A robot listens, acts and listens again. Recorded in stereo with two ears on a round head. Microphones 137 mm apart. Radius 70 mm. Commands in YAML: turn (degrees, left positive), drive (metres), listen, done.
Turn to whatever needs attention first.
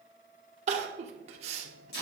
turn: -50
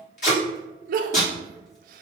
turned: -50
turn: -75
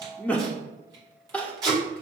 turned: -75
turn: 10
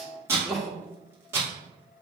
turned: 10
done: "Found it: crying, straight ahead."